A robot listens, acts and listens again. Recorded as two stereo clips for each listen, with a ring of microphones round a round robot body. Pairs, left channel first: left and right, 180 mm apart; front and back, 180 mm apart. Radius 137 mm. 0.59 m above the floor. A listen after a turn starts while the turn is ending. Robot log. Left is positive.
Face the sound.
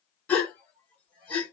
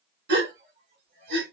note: The gasp: 170° left.
cmd yaw +170
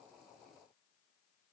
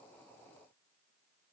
end: I heard a gasp from this way, but can't make it out now.